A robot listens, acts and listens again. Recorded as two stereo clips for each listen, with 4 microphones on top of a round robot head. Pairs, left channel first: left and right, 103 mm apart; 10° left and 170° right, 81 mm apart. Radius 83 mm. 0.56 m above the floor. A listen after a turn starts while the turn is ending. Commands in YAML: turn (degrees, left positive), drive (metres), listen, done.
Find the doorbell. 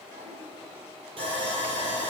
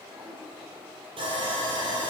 listen: true
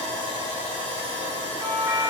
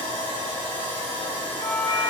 turn: -30
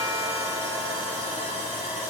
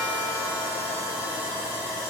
listen: true
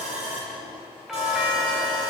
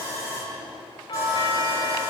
done: "Facing the doorbell, 2 to 4 m away."